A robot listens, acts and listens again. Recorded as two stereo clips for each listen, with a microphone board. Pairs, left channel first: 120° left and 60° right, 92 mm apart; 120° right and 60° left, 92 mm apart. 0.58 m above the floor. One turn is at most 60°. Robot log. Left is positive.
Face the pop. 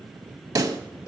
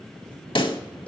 note: The pop: 105° right.
cmd yaw -60
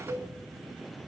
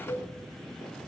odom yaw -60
note: Nothing new. It was at 45° right.
cmd yaw -45
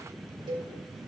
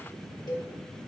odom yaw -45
end: Facing where the pop came from. I can't hear it now.